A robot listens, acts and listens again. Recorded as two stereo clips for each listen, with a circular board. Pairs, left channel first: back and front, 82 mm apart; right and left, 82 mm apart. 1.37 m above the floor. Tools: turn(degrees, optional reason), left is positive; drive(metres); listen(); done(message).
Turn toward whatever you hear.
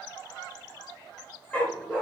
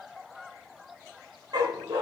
turn(degrees=115, reason="The dog barking: 115° left.")
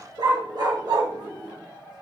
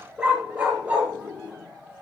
turn(degrees=20, reason="The dog barking is now 20° left.")
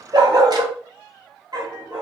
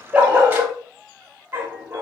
turn(degrees=25, reason="The dog barking is now 25° left.")
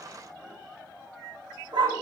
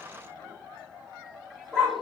turn(degrees=-10, reason="The dog barking is now 10° right.")
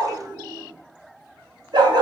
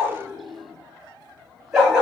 done("Found it: a dog barking, straight ahead, 2 to 4 m away.")